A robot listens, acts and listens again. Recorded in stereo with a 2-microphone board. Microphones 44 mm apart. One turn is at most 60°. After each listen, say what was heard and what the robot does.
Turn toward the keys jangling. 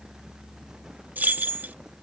The keys jangling: about 40° right or 140° right. Turn 40° right.
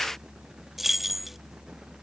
Facing the keys jangling.